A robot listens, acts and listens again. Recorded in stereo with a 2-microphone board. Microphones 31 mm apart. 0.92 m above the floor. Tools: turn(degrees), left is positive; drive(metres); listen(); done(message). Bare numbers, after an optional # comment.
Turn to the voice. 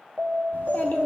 turn(90)
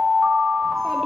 listen()
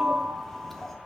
# The child speaking is now 10° left.
turn(10)
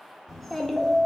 done("Facing the child speaking.")